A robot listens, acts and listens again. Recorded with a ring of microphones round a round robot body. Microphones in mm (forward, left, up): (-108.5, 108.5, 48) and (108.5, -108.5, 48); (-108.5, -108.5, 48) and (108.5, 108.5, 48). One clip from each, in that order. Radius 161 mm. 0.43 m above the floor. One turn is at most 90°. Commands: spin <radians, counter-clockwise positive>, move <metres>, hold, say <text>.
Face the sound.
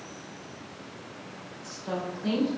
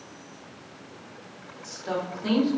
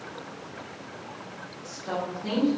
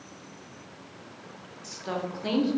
spin 0.35
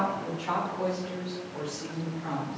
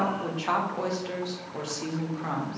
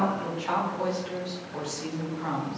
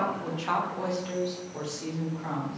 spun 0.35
spin -1.13
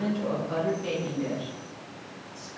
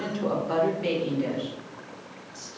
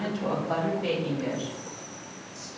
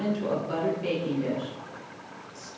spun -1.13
spin -0.79
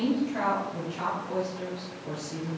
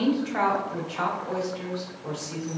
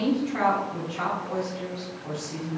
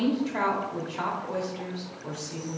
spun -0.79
say Facing the woman speaking.